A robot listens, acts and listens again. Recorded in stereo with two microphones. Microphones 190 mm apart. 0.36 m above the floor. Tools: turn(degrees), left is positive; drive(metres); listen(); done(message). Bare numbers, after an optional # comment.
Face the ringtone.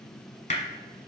listen()
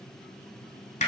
listen()
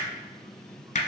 done("I can't make out a ringtone, only hammering.")